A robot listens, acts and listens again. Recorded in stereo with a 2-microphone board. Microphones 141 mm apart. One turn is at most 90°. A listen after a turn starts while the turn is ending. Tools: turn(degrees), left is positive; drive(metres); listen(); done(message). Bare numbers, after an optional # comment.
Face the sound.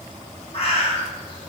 # The bird: about 45° left or 135° left.
turn(45)
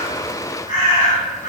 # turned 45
# So it is at 85° left.
turn(85)
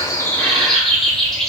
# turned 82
done("Found it: a bird, straight ahead, under 1 m away.")